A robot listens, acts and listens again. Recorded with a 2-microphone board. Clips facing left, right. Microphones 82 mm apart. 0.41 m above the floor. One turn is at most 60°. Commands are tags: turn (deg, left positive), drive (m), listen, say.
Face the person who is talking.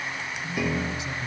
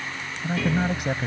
<turn deg="-55"/>
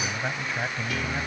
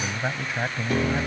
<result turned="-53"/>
<turn deg="-15"/>
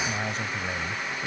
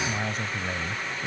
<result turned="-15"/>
<say>Found it: a man speaking, straight ahead.</say>